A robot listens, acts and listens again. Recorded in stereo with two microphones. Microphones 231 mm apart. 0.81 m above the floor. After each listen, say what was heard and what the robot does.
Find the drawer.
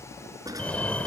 The drawer: about 15° right or 165° right. Turn 15° right.
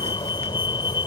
Keep listening.
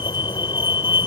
Keep listening.
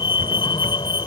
I heard a drawer, but can't make it out now. It was about straight ahead or 150° right.